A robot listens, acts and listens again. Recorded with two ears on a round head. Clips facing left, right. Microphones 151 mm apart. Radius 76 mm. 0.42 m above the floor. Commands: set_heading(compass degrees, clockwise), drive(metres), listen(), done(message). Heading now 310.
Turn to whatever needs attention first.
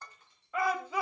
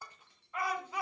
set_heading(245)
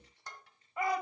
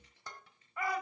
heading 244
set_heading(224)
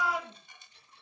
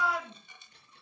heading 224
done("Facing the shout, 2 to 4 m away.")